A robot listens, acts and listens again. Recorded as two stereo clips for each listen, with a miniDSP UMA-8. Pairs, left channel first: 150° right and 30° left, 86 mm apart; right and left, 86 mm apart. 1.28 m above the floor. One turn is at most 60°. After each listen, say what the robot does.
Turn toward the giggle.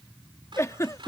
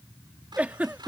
Turn 60° left.
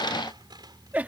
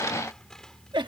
Turn 60° left.
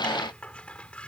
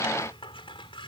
Turn 40° left.
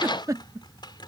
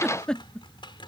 Turn 10° right.
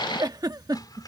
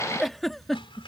Found it: a giggle, straight ahead.